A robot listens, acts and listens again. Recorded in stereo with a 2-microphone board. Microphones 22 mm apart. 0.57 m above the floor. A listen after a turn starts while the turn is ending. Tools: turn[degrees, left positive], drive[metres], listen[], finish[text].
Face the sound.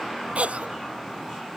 Action: turn[-90]
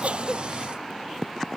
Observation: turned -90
Action: listen[]
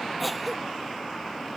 Action: finish[Facing the cough.]